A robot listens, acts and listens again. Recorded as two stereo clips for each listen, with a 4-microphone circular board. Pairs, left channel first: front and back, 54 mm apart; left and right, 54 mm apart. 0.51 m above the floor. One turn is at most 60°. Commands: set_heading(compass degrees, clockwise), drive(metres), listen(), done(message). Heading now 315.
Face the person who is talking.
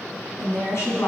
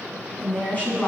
set_heading(280)
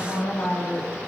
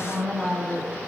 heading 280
done("Facing the woman speaking, 2 to 4 m away.")